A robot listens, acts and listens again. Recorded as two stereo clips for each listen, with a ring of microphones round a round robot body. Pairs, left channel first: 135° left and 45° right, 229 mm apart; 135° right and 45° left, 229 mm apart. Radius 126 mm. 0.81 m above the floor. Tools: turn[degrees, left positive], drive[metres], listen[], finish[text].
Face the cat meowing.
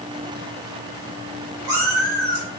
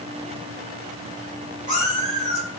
Thought: The cat meowing: 20° right.
Action: turn[-20]
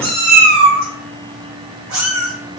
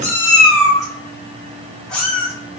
Thought: The cat meowing is now 55° right.
Action: turn[-55]
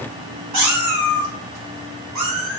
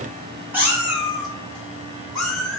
Thought: The cat meowing is now 50° right.
Action: turn[-50]
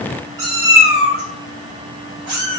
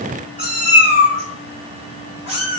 Thought: The cat meowing is now 15° right.
Action: turn[-15]
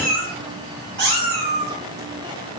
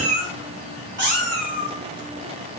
Action: finish[Facing the cat meowing.]